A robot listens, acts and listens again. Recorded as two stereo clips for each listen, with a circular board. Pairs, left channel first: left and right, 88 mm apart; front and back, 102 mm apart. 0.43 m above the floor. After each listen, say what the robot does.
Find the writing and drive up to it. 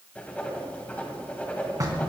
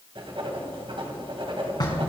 Turn 160° left.
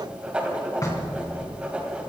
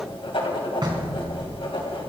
Turn 15° right.
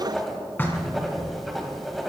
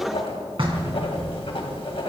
Drive 1.0 m forward.
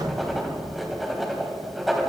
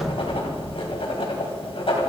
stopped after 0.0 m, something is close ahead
Blocked. The writing is further on, straight ahead.